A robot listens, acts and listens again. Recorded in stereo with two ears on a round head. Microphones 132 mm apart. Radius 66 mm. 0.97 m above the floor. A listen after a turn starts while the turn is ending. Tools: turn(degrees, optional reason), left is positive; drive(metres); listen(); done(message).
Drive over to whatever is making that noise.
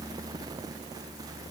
listen()
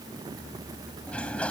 turn(degrees=30)
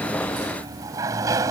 turn(degrees=-25, reason="So it is at 25° right.")
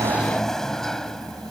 drive(metres=1.0)
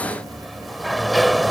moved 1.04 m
drive(metres=1.0)
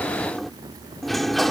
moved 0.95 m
drive(metres=1.0)
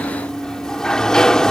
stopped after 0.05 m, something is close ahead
done("Arrived at the sliding door, straight ahead.")